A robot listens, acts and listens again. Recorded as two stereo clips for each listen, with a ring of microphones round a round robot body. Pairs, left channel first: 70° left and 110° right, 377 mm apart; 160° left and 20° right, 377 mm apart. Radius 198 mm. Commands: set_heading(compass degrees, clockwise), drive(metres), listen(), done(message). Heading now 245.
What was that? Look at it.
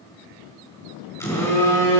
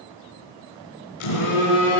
set_heading(95)
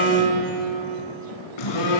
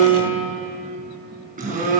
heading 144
set_heading(99)
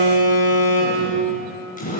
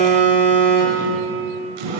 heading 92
done("Found it: a phone buzzing, straight ahead, over 4 m away.")